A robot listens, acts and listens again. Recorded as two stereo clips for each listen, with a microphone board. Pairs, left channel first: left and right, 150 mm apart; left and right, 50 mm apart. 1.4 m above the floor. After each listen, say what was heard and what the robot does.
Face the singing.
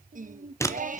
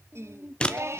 The singing: about 60° right or 120° right. Turn 60° right.
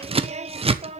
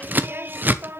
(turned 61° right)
So it is at 50° right. Turn 50° right.
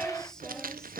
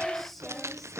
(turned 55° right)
Found it: singing, straight ahead.